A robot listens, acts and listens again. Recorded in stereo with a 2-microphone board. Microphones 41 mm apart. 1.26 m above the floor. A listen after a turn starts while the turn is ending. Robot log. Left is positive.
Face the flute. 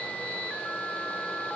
cmd idle
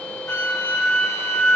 cmd yaw +90
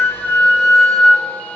note: So it is at 10° left.
cmd yaw +10
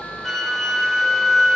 end: Found it: a flute, straight ahead.